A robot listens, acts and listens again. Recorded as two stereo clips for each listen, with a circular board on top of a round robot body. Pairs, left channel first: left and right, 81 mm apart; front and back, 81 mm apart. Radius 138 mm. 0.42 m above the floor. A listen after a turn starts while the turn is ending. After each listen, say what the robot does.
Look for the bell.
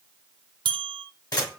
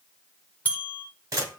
Turn 75° right.
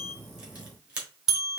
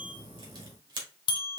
Turn 10° right.
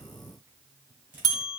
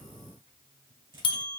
Facing the bell.